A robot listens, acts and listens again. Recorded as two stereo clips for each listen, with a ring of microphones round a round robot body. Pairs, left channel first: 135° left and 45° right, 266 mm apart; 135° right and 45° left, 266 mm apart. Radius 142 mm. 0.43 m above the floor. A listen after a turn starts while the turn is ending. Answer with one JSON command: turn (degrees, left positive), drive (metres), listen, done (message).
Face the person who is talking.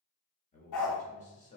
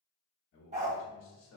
{"turn": -165}
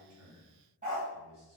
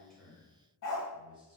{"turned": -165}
{"turn": -25}
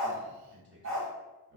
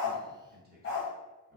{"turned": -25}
{"done": "Found it: a man speaking, straight ahead, 1 to 2 m away."}